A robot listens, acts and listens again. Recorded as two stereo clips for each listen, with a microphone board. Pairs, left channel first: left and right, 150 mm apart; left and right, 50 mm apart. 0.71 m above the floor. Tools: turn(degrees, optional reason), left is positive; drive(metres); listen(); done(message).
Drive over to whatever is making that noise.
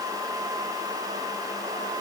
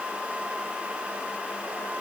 listen()
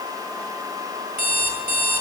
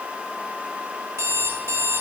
turn(degrees=-65, reason="The alarm clock: about 65° right or 115° right.")
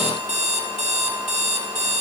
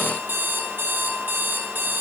turn(degrees=-50, reason="So it is at 50° right.")
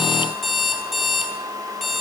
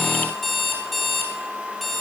drive(metres=1.0)
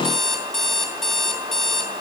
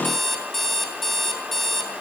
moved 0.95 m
drive(metres=1.0)
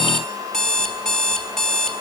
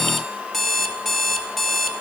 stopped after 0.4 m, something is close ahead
done("I am next to the alarm clock.")